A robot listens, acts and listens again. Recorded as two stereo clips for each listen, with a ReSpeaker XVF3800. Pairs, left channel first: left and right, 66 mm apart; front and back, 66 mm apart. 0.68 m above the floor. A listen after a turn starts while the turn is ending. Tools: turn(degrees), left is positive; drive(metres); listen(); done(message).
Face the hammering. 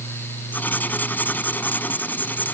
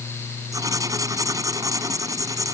listen()
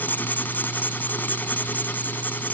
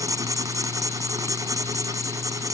listen()
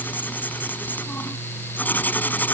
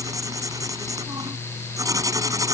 done("I can't make out hammering, only writing.")